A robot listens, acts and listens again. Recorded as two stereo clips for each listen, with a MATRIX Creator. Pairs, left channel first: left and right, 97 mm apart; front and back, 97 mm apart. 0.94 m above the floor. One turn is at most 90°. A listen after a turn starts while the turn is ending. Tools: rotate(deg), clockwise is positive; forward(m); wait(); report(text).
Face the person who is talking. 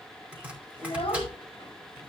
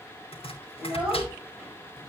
rotate(-90)
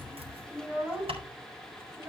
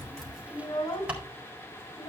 rotate(20)
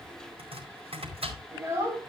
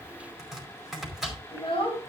rotate(25)
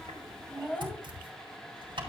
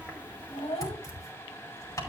rotate(-10)
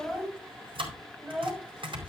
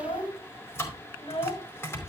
report("Facing the child speaking, over 4 m away.")